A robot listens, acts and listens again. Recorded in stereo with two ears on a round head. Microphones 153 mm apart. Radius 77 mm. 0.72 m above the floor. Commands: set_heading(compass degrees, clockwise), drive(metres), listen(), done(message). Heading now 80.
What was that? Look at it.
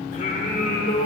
set_heading(30)
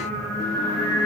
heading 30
set_heading(0)
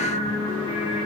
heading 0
set_heading(330)
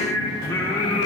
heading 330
set_heading(300)
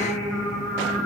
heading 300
done("Found it: singing, straight ahead, 2 to 4 m away.")